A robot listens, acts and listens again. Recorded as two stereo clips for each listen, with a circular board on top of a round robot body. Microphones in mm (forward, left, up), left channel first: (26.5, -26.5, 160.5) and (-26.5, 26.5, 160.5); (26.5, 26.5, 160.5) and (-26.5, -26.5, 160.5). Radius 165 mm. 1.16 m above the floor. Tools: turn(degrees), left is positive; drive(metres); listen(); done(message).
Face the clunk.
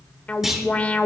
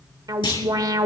turn(degrees=50)
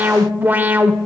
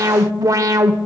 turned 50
done("Facing where the clunk came from. I can't hear it now.")